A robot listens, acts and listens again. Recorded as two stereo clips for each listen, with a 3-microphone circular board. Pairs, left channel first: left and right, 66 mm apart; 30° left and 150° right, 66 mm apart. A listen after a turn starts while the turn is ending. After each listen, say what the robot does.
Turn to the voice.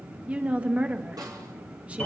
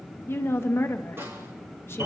Turn 20° right.
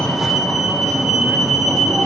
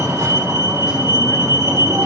Keep listening.
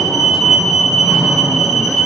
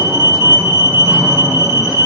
Keep listening.
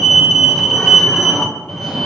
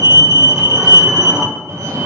I heard a woman speaking from this way, but can't make it out now.